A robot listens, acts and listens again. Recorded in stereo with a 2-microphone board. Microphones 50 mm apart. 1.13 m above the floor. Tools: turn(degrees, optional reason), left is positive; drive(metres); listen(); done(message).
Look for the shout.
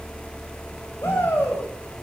turn(degrees=65, reason="The shout: about 65° left or 115° left.")
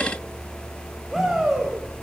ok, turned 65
done("Facing the shout.")